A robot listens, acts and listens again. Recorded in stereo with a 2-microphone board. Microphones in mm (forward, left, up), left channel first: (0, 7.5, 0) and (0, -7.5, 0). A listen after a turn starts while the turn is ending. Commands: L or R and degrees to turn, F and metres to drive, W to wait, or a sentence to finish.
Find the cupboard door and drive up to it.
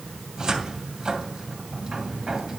R50
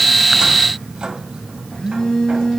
R80
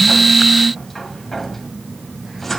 L10
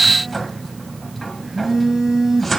F1.0
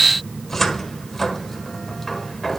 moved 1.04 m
L20
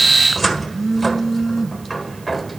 F1.0
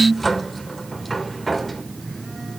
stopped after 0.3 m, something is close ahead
I am next to the cupboard door.